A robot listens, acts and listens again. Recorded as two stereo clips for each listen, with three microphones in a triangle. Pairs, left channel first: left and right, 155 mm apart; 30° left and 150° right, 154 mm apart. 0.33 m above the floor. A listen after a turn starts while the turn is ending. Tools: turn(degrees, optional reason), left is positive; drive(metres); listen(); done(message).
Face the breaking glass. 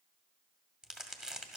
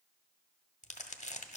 listen()
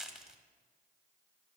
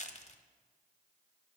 listen()
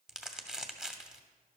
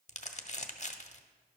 done("I can't make out breaking glass to turn to.")